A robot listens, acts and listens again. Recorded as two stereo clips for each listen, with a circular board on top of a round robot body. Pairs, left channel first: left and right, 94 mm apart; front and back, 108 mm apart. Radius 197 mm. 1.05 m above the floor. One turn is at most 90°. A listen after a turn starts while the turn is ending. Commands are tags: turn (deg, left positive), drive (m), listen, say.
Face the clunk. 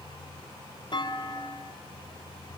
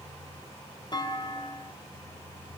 <turn deg="50"/>
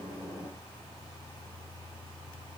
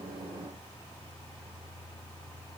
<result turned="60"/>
<turn deg="-10"/>
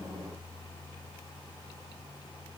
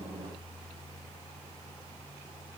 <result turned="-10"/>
<say>Facing where the clunk came from. I can't hear it now.</say>